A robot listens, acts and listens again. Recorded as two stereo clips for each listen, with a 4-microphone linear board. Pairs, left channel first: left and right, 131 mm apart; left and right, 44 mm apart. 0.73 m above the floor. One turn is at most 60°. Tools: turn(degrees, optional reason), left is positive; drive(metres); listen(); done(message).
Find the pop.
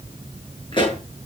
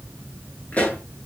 turn(degrees=40, reason="The pop: about 40° left or 140° left.")
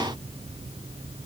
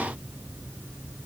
listen()
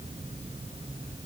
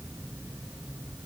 done("I heard a pop, but can't make it out now. It was about straight ahead or 100° left.")